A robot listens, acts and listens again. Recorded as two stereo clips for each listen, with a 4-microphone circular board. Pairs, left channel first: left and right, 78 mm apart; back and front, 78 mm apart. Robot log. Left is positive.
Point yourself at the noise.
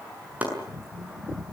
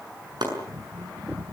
note: The chopping: 20° right.
cmd yaw -20
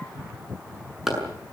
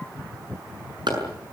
end: Found it: chopping, straight ahead, over 4 m away.